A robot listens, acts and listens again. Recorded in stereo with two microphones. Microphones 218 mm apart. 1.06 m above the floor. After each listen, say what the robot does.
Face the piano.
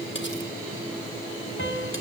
Turn 65° left.
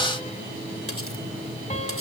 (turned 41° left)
Turn 35° left.
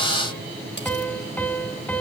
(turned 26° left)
Facing the piano, 2 to 4 m away.